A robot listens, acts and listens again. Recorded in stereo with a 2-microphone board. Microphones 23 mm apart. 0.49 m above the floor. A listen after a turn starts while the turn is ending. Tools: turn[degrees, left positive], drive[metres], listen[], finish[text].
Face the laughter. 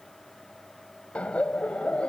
Thought: The laughter: about 65° left or 115° left.
Action: turn[65]
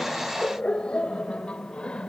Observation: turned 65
Thought: So it is at 50° left.
Action: turn[50]
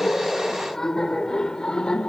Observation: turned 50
Thought: The laughter is now 40° left.
Action: turn[40]
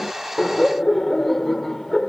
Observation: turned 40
Thought: The laughter is now 10° left.
Action: turn[10]
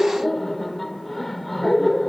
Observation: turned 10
Action: finish[Found it: laughter, straight ahead.]